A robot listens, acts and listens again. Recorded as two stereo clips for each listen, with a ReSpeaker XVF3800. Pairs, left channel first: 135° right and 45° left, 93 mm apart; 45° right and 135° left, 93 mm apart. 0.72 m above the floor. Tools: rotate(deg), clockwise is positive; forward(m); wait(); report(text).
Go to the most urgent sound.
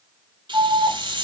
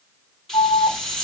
rotate(-10)
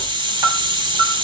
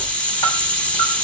forward(1.0)
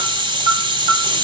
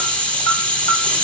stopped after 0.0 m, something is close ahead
report("Blocked. The alarm is further on, straight ahead.")